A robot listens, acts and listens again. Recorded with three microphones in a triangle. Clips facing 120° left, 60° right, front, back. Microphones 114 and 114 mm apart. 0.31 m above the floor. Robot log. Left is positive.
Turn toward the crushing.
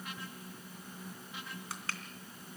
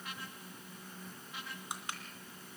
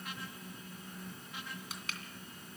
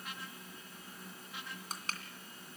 note: The crushing: 130° right.
cmd yaw -130
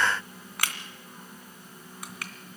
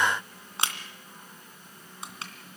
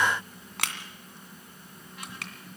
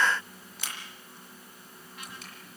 end: Found it: crushing, straight ahead.